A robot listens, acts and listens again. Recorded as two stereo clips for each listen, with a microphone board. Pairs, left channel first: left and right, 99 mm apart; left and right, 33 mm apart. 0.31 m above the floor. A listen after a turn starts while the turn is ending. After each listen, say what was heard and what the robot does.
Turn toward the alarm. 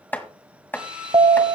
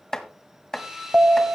The alarm: about 55° right or 125° right. Turn 55° right.
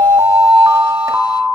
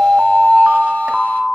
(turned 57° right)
So it is at 35° right. Turn 35° right.
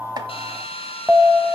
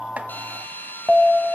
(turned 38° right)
Facing the alarm, 1 to 2 m away.